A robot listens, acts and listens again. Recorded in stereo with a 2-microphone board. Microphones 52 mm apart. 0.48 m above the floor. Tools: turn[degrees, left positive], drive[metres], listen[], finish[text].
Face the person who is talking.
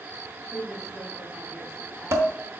Action: turn[30]
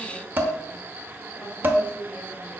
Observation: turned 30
Thought: So it is at 140° left.
Action: turn[140]
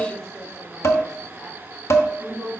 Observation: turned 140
Action: finish[Found it: a woman speaking, straight ahead, 1 to 2 m away.]